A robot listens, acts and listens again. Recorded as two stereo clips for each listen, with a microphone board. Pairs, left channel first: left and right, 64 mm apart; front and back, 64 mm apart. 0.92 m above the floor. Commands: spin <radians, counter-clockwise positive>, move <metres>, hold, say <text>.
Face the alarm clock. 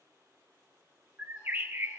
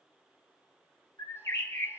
hold
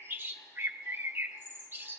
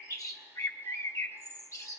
hold
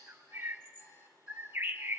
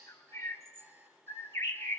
spin 2.27
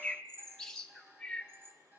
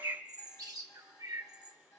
spin -0.52
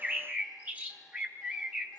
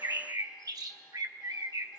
hold
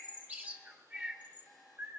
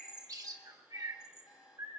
say Facing the alarm clock, 2 to 4 m away.